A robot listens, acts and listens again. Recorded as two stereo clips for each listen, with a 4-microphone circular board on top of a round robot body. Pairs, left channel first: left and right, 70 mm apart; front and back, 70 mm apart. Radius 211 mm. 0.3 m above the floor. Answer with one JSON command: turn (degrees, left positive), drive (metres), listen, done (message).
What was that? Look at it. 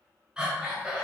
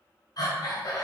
{"turn": -15}
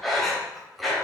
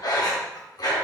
{"done": "Facing the breathing, 2 to 4 m away."}